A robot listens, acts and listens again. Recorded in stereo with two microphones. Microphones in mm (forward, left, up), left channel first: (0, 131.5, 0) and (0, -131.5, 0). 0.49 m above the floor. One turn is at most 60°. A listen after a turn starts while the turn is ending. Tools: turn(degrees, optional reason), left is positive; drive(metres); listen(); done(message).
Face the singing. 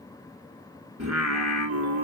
turn(degrees=-60)
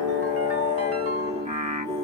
turn(degrees=-25, reason="So it is at 25° right.")
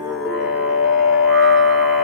done("Facing the singing, 1 to 2 m away.")